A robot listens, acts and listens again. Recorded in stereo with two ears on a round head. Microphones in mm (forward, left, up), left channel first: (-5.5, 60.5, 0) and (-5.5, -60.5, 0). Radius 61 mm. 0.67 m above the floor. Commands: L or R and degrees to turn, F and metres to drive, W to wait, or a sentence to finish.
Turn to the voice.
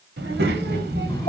R90
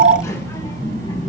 L30
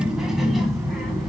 Found it: a child speaking, straight ahead, 2 to 4 m away.